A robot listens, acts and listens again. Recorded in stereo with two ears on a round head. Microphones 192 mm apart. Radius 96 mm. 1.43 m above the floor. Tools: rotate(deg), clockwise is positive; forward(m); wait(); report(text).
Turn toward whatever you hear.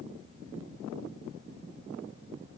wait()
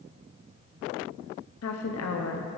rotate(-90)
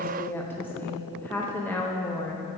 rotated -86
rotate(-10)
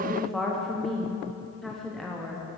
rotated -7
report("Found it: a woman speaking, straight ahead.")